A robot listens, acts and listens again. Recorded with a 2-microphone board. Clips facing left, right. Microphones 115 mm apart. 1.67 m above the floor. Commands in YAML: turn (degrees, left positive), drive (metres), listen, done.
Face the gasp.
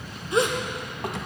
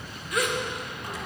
turn: 25
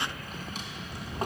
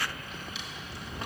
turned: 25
listen: true
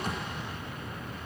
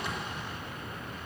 done: "I heard a gasp, but can't make it out now. It was about straight ahead or 130° left."